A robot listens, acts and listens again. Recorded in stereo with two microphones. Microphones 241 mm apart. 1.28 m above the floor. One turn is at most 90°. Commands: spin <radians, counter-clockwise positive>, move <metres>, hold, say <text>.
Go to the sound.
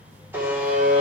spin -0.52
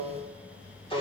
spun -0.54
spin 0.35
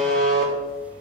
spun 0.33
move 1.0
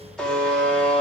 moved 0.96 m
move 1.0
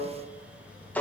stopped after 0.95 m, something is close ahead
say I am next to the buzzer.